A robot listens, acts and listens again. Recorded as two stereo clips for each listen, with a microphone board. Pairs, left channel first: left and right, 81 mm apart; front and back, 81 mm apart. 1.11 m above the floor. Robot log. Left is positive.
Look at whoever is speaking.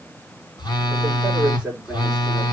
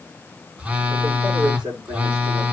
note: The man speaking: 170° right.
cmd yaw -170
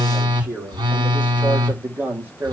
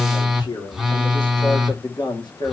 note: The man speaking is now 25° right.
cmd yaw -25
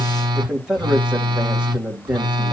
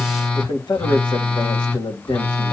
note: The man speaking is now 15° right.
cmd yaw -15
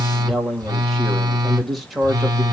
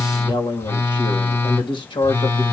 end: Found it: a man speaking, straight ahead, 2 to 4 m away.